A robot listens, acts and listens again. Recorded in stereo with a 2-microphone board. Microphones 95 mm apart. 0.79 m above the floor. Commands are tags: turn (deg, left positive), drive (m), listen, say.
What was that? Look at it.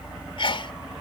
<turn deg="60"/>
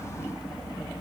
<listen/>
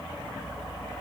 <say>I heard a sneeze, but can't make it out now. It was about straight ahead or 60° left.</say>